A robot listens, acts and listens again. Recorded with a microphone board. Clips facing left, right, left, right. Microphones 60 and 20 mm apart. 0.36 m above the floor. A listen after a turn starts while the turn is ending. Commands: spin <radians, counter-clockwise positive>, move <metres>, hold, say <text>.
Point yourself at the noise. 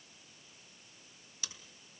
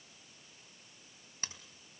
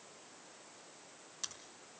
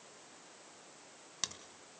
spin -0.70
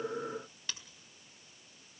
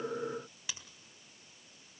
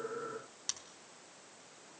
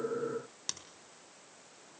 spin -0.17
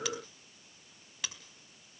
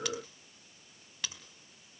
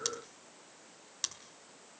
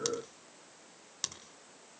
say Facing the scissors.